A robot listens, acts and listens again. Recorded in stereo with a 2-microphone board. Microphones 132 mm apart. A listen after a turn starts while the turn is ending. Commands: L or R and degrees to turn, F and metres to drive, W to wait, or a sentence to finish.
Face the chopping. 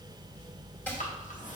L30
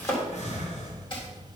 L140
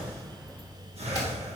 W
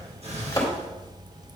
L30
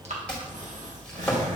L10
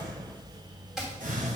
Found it: chopping, straight ahead.